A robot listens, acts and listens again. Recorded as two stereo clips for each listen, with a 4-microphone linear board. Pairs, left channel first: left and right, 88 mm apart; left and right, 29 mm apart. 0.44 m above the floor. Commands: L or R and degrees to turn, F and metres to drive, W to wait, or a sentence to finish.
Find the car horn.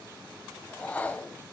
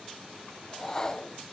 W
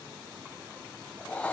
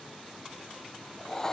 W
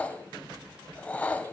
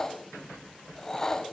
I can't make out a car horn to turn to.